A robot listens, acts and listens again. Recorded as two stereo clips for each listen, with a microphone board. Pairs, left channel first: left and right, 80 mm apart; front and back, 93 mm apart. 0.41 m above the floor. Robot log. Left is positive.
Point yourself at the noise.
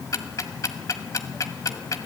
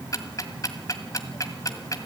note: The ticking: 50° left.
cmd yaw +50
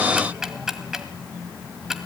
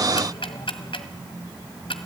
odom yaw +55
end: Facing the ticking, 1 to 2 m away.